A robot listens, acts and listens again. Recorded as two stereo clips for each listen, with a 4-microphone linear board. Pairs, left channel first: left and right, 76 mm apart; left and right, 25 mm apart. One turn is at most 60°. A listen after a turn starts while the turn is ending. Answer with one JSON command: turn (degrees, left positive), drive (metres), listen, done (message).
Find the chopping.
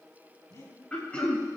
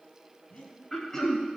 {"listen": true}
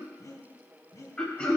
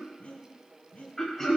{"listen": true}
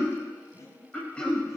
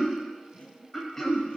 {"done": "I can't make out chopping, only breathing and throat clearing."}